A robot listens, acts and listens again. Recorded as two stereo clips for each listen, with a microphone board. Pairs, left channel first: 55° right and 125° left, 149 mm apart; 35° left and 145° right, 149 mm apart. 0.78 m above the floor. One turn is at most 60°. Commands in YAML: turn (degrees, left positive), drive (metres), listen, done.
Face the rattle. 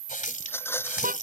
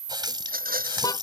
turn: -60
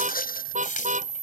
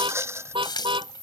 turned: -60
turn: -60
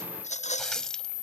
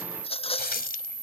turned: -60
turn: -15
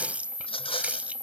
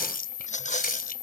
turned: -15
done: "Found it: a rattle, straight ahead."